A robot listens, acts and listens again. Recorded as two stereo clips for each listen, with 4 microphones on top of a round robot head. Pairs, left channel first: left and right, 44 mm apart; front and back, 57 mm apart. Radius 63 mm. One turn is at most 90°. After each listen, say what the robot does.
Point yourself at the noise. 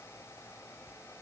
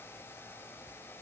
Keep listening.
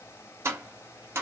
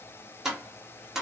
Turn 90° right.
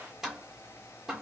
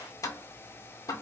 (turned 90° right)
Turn 10° right.
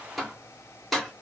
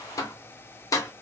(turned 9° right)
Facing the tapping.